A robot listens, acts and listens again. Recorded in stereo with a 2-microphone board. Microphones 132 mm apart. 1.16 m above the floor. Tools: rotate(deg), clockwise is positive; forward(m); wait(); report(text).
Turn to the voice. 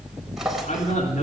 rotate(-70)
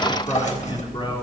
rotate(-40)
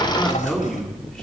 report("Found it: a man speaking, straight ahead.")